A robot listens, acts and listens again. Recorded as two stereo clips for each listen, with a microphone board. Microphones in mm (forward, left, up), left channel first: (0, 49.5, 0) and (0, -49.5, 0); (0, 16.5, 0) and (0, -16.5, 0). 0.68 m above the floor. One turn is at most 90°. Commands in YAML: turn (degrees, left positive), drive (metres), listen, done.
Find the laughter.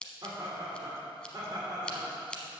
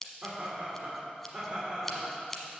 turn: -35
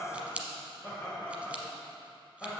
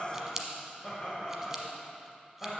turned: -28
done: "Found it: laughter, straight ahead."